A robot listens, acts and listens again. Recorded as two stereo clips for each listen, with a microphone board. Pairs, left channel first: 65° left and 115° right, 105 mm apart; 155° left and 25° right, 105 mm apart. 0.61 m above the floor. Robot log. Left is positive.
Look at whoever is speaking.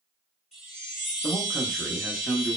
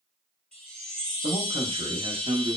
note: The man speaking: 25° right.
cmd yaw -25
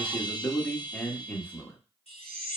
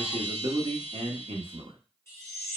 end: Facing the man speaking.